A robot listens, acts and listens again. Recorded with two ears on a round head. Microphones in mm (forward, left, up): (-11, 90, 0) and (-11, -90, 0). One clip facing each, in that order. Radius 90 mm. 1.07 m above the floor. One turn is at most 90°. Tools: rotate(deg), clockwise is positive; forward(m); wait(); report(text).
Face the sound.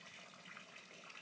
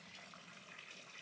wait()
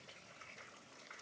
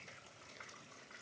wait()
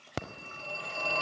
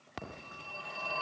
rotate(-65)
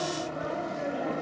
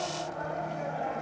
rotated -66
rotate(-45)
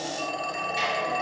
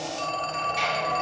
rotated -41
report("Facing the phone ringing.")